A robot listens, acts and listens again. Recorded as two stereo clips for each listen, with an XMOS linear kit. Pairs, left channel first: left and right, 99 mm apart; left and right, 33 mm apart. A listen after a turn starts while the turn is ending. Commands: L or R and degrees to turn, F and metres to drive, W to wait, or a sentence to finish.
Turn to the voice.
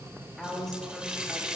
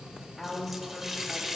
L30
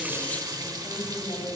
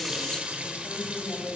L125
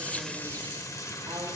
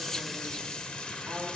W
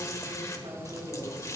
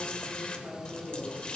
R65
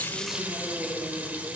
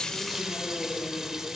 R20
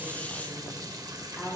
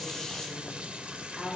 Found it: a woman speaking, straight ahead, over 4 m away.